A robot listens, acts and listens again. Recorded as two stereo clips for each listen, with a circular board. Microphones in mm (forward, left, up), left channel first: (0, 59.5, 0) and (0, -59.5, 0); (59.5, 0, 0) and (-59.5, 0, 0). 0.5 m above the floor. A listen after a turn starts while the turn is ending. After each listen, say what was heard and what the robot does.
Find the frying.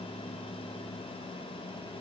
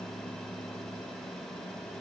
Keep listening.
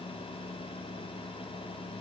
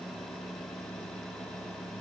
Keep listening.
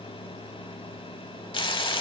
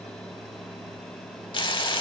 The frying: 45° left. Turn 45° left.
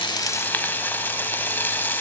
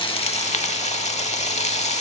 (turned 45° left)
The frying is now 15° left. Turn 15° left.
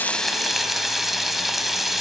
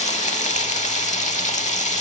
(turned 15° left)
Found it: frying, straight ahead, under 1 m away.